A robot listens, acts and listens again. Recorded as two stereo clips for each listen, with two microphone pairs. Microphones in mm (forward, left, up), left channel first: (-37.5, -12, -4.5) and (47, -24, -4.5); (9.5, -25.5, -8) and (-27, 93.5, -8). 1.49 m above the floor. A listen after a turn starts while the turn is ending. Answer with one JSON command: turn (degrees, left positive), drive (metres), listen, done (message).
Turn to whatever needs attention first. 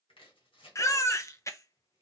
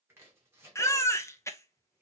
{"turn": -140}
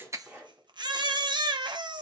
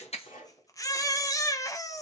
{"turn": -10}
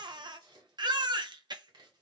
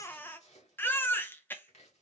{"done": "Found it: a baby crying, straight ahead, under 1 m away."}